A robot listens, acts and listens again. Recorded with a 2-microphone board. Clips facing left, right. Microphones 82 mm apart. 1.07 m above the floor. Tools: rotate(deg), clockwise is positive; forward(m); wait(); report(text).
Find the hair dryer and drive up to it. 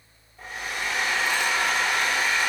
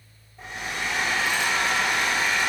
rotate(25)
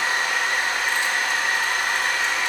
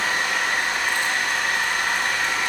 forward(1.0)
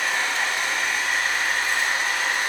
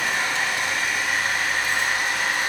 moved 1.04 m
forward(1.0)
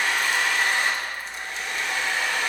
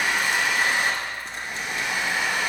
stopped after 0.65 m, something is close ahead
rotate(15)
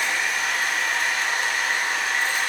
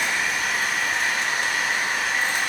report("I am next to the hair dryer.")